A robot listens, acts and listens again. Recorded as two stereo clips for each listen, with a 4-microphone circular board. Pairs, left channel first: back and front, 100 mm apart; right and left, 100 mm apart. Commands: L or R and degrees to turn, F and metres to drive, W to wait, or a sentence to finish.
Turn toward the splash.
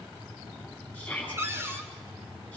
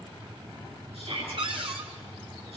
W
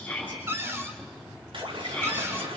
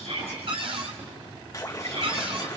R30
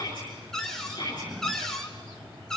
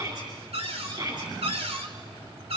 I heard a splash from this way, but can't make it out now.